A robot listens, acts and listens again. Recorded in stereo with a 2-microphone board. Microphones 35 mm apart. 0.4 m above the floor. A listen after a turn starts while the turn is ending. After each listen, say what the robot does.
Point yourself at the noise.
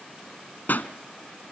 Turn 70° left.
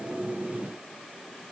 Keep listening.
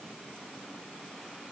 I heard a pop, but can't make it out now. It was about straight ahead or 40° left.